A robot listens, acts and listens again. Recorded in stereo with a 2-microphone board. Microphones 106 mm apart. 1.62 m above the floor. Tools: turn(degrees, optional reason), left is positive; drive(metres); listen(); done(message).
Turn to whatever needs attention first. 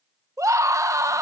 turn(degrees=-30, reason="The scream: about 30° right or 150° right.")
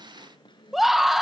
done("Facing the scream, 1 to 2 m away.")